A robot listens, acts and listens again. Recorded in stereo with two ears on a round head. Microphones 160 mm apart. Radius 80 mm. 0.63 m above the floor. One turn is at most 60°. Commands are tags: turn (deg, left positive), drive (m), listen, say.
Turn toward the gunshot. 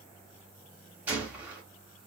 <turn deg="-30"/>
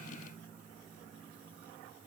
<listen/>
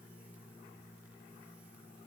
<say>I heard a gunshot, but can't make it out now. It was about 20° left or 140° right.</say>